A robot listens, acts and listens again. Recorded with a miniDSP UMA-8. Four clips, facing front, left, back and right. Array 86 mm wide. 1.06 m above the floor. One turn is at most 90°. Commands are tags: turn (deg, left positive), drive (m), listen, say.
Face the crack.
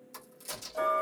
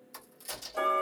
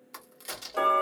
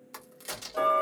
<turn deg="-90"/>
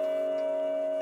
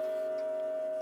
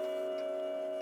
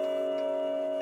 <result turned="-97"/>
<turn deg="-35"/>
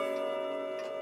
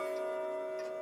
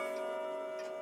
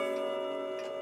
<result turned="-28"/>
<turn deg="-10"/>
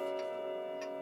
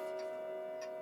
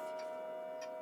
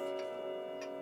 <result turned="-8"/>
<say>Facing where the crack came from. I can't hear it now.</say>